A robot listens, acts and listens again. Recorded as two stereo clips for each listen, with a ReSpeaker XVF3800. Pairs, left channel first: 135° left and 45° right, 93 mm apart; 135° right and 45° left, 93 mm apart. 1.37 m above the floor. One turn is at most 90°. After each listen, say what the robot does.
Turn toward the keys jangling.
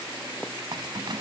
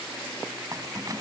Found it: keys jangling, straight ahead.